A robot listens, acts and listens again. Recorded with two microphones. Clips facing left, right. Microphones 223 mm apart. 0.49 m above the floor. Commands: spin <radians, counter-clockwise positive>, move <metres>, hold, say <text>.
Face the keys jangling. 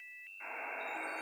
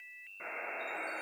hold
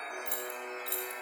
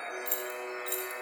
spin 1.13
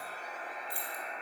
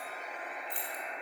spin 0.17
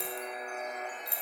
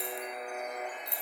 spin 0.17
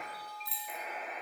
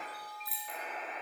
say Facing the keys jangling.